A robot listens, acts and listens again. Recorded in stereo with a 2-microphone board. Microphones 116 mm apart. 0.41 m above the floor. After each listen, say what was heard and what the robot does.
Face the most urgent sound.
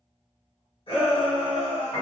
The shout: about 60° left or 120° left. Turn 60° left.
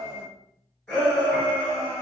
So it is at 20° left. Turn 20° left.
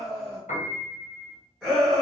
The shout is now 10° left. Turn 10° left.
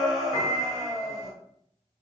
Found it: a shout, straight ahead.